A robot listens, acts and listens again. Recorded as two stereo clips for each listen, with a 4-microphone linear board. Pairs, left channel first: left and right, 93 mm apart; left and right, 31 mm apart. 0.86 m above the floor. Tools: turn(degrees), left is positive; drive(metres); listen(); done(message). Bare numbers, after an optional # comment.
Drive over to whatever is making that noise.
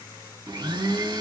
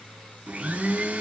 # The blender: about 55° right or 125° right.
turn(-55)
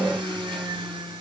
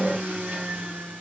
# So it is at 70° right.
turn(-70)
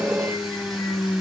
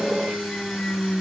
drive(1.0)
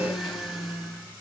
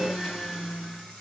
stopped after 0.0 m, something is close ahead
done("Blocked. The blender is further on, straight ahead.")